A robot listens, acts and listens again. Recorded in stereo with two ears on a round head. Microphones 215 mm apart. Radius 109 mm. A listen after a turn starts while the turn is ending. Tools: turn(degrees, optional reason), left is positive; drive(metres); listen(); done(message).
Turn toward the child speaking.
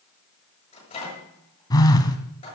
listen()
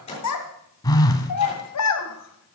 turn(degrees=90)
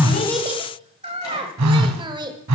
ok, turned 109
turn(degrees=-20, reason="So it is at 20° right.")
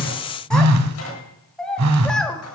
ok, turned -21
done("Found it: a child speaking, straight ahead.")